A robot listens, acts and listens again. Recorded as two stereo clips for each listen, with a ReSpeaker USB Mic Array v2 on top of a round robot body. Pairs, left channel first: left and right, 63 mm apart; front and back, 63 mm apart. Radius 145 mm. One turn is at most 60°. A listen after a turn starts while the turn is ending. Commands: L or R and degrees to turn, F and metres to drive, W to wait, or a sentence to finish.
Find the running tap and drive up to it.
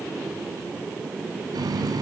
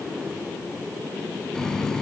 R60
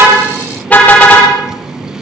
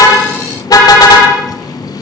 R10
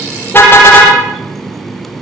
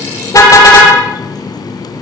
F1.0
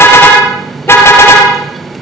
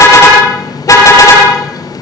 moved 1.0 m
F1.0
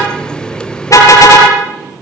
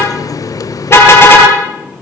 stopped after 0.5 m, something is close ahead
L15
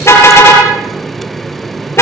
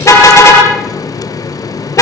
I am next to the running tap.